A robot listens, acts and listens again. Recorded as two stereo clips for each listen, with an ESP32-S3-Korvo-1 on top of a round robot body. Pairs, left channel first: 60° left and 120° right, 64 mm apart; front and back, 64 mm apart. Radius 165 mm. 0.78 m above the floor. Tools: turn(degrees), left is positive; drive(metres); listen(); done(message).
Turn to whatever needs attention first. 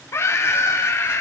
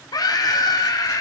turn(degrees=15)
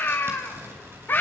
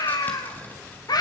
done("Found it: a scream, straight ahead.")